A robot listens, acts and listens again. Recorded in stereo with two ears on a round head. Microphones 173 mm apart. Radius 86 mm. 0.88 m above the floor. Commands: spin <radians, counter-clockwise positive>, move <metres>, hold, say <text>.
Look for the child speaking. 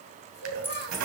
spin 0.96
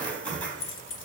hold
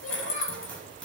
hold
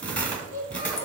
spin 1.57
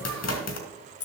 hold
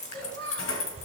spin 0.52
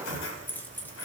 hold
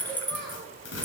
hold
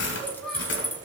say Found it: a child speaking, straight ahead.